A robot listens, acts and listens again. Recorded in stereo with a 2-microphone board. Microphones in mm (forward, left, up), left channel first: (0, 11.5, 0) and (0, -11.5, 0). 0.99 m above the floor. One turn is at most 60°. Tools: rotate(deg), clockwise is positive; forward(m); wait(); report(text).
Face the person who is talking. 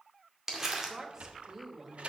rotate(25)
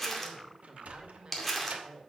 rotate(60)
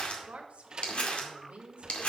rotate(60)
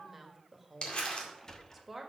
rotate(10)
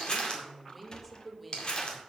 report("Found it: a woman speaking, straight ahead.")